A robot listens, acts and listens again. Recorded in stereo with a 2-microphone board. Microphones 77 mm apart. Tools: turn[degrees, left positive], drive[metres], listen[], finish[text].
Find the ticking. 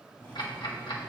Action: turn[90]
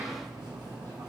Action: listen[]
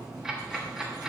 Thought: The ticking is now 10° right.
Action: turn[-10]
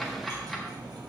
Action: finish[Facing the ticking, 1 to 2 m away.]